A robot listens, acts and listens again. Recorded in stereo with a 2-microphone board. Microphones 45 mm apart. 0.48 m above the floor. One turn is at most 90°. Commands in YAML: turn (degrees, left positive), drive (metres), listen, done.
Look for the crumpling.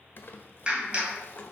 turn: 55
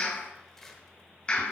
turn: 10
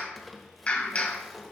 done: "Facing the crumpling."